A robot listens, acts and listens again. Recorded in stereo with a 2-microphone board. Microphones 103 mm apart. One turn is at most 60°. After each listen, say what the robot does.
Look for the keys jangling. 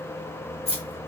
Turn 60° left.
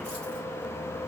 Keep listening.
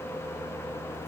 Keep listening.
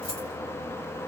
I heard keys jangling, but can't make it out now. It was about 10° left or 50° left.